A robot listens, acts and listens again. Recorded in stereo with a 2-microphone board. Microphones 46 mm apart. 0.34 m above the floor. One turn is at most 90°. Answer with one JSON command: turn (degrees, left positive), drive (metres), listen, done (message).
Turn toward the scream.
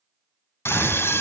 {"turn": 65}
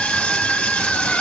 {"turn": 25}
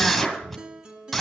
{"done": "Found it: a scream, straight ahead."}